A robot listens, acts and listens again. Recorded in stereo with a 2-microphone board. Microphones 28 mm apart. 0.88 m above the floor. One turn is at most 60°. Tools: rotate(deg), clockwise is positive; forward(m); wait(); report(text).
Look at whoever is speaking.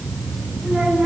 rotate(60)
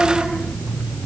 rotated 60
rotate(30)
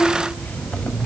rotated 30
rotate(-10)
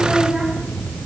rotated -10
wait()
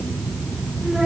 report("Facing the child speaking, over 4 m away.")